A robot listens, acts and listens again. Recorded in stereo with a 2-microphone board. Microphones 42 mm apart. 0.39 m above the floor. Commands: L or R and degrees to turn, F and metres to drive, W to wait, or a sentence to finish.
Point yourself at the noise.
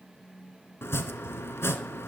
L90
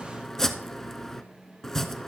L10
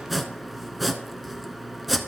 Facing the chopping, under 1 m away.